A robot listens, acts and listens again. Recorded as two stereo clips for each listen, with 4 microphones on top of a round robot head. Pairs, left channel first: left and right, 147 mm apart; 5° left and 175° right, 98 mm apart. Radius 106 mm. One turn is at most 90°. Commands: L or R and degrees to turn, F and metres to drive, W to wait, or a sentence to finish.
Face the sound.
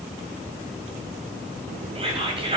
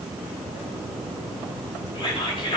R40
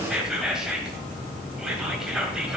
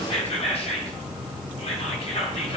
Found it: whispering, straight ahead.